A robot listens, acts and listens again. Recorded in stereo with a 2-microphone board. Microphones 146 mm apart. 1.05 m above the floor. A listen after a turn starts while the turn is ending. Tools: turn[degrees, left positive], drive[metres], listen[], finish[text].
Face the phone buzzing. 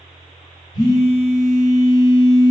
Thought: The phone buzzing: about 30° left or 150° left.
Action: turn[30]
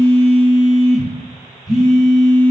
Action: finish[Found it: a phone buzzing, straight ahead.]